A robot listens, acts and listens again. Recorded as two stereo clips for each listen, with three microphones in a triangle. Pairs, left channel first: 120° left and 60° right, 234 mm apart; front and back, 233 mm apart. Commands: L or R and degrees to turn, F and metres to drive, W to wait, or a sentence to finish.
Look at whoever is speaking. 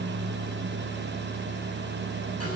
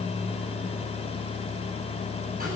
W
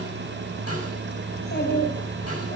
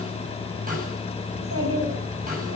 L165
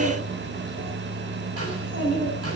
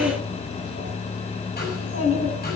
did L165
R15
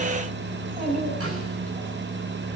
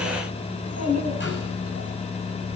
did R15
Facing the child speaking, over 4 m away.